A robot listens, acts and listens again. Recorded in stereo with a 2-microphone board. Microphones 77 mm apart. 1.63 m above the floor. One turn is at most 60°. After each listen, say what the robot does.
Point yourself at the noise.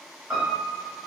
Turn 15° right.
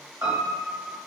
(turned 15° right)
Turn 60° right.
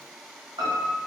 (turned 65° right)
Turn 60° right.
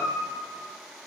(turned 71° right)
Turn 15° right.
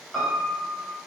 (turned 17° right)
Found it: a piano, straight ahead, 1 to 2 m away.